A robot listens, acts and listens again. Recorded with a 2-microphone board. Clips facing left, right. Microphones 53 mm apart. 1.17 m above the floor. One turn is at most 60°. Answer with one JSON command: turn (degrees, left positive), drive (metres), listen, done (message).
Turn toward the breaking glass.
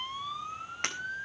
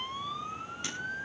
{"turn": 60}
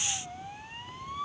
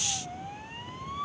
{"listen": true}
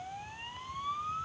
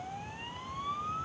{"done": "I heard breaking glass, but can't make it out now. It was about straight ahead or 60° left."}